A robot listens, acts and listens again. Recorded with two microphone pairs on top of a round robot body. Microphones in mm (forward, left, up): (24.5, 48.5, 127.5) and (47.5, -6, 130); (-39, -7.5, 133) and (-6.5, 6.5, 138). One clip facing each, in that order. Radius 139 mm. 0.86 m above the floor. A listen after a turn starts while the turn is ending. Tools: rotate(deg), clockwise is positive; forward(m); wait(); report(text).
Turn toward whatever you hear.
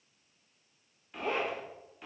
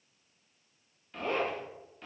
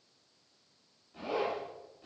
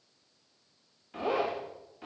rotate(-30)
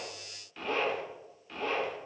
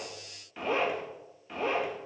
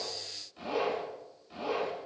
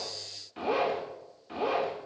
report("Found it: a zipper, straight ahead.")